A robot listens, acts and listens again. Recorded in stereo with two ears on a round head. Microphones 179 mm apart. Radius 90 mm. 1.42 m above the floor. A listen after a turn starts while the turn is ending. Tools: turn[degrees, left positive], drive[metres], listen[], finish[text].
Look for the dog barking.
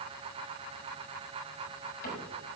Action: listen[]
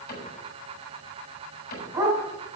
Thought: The dog barking: about 20° right or 160° right.
Action: turn[-20]
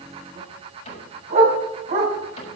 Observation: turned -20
Thought: So it is at 140° right.
Action: turn[-140]
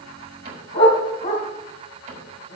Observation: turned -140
Thought: The dog barking is now 35° left.
Action: turn[35]
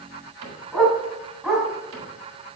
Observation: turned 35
Action: finish[Found it: a dog barking, straight ahead, 2 to 4 m away.]